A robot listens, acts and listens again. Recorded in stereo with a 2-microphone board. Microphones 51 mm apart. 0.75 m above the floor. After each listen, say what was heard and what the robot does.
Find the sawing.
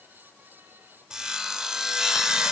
Turn 30° right.
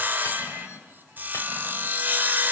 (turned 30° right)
So it is at 140° right. Turn 140° right.
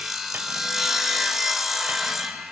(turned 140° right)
Found it: sawing, straight ahead.